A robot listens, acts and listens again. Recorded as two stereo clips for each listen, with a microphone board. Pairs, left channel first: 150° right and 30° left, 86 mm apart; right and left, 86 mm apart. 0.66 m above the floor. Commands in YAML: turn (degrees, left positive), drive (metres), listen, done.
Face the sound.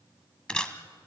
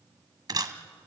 turn: 130
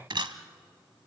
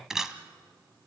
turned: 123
done: "Facing the camera shutter."